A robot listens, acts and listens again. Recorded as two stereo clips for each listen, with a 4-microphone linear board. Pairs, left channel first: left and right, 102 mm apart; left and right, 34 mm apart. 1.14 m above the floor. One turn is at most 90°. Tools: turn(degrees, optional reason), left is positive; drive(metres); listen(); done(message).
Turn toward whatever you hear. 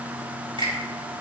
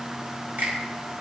turn(degrees=-55, reason="The finger snap: about 55° right or 125° right.")
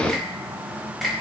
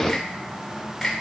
done("Facing the finger snap, over 4 m away.")